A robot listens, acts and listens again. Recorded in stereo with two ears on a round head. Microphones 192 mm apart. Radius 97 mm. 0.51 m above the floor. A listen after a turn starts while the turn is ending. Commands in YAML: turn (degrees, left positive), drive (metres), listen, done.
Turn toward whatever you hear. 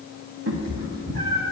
turn: -45
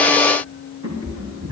turn: -80
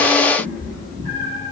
turn: -40
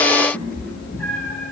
done: "Facing the cat meowing, 2 to 4 m away."